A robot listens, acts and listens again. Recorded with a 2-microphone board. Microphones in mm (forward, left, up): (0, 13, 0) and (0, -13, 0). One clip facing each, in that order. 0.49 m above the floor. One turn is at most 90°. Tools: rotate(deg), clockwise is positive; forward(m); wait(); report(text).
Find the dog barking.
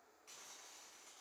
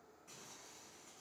wait()
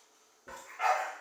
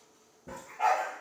rotate(-65)
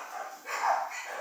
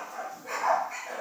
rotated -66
rotate(-35)
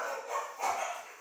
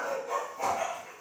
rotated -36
rotate(10)
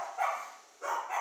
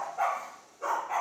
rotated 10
rotate(10)
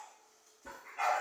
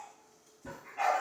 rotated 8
report("Found it: a dog barking, straight ahead, 2 to 4 m away.")